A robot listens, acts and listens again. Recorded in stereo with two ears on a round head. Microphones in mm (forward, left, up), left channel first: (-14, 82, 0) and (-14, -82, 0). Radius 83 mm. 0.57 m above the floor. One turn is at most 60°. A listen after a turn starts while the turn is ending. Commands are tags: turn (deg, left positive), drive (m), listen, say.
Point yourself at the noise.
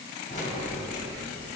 <turn deg="45"/>
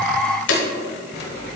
<turn deg="50"/>
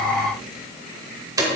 <turn deg="-20"/>
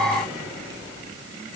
<listen/>
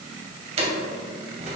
<turn deg="-35"/>
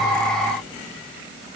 <listen/>
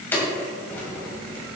<turn deg="10"/>
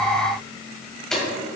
<say>Facing the keys jangling.</say>